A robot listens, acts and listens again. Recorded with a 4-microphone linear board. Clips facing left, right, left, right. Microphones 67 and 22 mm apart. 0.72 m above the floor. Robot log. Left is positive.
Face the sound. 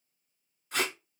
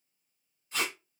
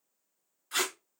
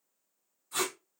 note: The tape being pulled: about 70° left or 110° left.
cmd yaw +70
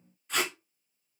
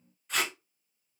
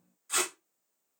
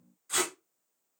end: Found it: tape being pulled, straight ahead.